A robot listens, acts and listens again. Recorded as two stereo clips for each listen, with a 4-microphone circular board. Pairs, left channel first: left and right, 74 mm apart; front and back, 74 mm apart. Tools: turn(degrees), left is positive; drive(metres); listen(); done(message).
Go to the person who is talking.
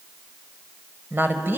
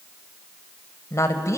turn(degrees=-35)
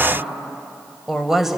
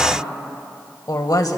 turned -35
drive(metres=1.0)
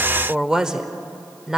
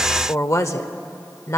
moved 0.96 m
turn(degrees=-15)
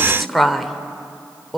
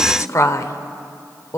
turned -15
drive(metres=1.0)
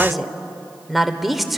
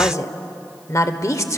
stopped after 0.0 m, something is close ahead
done("Arrived at the woman speaking, straight ahead.")